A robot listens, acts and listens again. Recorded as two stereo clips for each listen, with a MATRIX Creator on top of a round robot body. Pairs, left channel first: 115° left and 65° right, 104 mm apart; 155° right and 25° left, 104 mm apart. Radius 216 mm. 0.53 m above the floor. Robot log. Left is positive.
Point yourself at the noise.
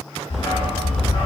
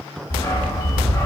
note: The dog barking: 140° left.
cmd yaw +140
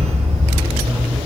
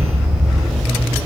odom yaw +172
note: The dog barking is now 75° right.
cmd yaw -75
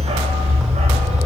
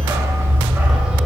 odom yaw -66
note: The dog barking is now 60° right.
cmd yaw -60
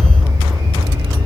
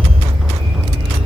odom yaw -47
note: The dog barking is now 15° right.
cmd yaw -15
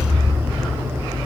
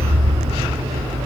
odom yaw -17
end: Facing the dog barking.